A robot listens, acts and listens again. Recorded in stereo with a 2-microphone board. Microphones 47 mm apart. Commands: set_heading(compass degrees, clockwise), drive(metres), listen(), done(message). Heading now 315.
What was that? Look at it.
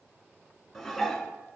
set_heading(285)
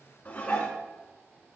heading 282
set_heading(142)
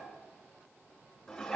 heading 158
set_heading(138)
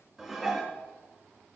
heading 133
done("Facing the dishes clattering, 2 to 4 m away.")